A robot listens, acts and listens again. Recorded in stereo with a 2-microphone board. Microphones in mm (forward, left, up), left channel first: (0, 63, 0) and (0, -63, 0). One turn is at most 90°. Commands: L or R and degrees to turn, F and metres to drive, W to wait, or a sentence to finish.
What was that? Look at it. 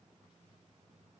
W
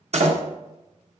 R60
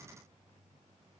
W
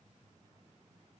I heard a door slam, but can't make it out now. It was about straight ahead or 60° right.